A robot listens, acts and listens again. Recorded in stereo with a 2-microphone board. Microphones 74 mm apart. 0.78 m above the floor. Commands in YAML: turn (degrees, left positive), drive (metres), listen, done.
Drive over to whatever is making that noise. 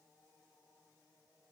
listen: true
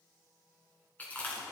turn: 20
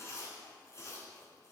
turn: 140
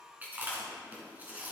turn: -20
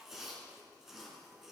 drive: 1.0
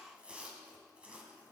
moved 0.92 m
turn: -15
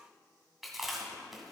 drive: 1.0
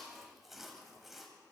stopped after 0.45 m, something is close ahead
done: "Arrived at the chewing, straight ahead."